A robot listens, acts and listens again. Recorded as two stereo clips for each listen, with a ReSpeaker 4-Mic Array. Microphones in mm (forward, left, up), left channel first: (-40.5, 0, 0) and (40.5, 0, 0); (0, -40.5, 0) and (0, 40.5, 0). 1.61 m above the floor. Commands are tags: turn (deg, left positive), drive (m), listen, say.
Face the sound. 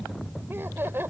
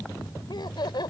<turn deg="-65"/>
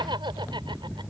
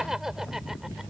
<say>Facing the laughter.</say>